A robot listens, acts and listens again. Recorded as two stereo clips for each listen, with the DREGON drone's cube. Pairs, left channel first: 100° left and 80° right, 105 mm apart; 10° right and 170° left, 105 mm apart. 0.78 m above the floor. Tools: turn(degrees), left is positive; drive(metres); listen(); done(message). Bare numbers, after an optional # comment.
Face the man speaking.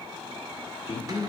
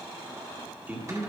# The man speaking: 100° left.
turn(100)
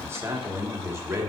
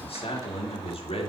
# The man speaking is now 15° right.
turn(-15)
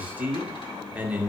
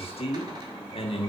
done("Facing the man speaking.")